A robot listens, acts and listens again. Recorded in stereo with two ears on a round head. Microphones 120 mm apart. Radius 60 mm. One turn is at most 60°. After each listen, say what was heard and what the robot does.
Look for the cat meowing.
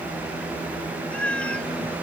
Turn 30° left.
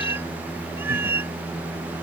So it is at 20° right. Turn 20° right.
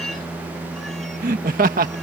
Keep listening.
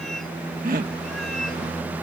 Keep listening.
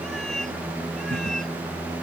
Facing where the cat meowing came from. I can't hear it now.